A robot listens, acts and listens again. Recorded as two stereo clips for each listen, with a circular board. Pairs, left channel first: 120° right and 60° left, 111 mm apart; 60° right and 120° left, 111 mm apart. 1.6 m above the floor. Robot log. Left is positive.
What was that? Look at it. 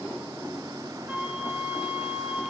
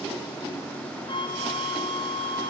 note: The flute: 20° right.
cmd yaw -20
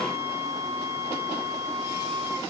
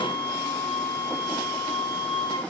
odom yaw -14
end: Facing the flute, 2 to 4 m away.